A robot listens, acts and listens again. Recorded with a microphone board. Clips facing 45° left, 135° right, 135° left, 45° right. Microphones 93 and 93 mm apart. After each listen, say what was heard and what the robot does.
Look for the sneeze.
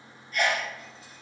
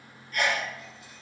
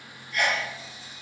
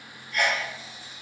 The sneeze: 90° right. Turn 90° right.
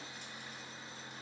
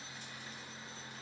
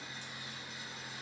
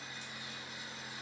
Facing where the sneeze came from. I can't hear it now.